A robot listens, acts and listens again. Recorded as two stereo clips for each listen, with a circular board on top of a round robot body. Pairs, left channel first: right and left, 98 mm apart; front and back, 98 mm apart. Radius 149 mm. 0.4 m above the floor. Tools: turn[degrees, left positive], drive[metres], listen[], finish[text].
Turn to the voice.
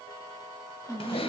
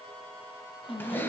Action: finish[Found it: a woman speaking, straight ahead.]